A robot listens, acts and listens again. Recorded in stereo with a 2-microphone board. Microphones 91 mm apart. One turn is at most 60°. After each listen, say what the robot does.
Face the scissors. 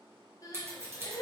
Turn 25° right.
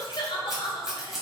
Found it: scissors, straight ahead, 1 to 2 m away.